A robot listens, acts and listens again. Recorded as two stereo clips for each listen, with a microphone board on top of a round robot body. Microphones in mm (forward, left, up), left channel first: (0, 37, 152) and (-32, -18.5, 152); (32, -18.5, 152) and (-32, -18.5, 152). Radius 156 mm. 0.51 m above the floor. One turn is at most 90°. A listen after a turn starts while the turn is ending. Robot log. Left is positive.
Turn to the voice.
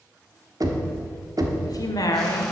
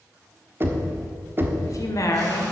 note: The woman speaking: 35° left.
cmd yaw +35
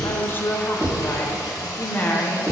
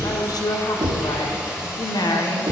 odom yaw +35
end: Found it: a woman speaking, straight ahead.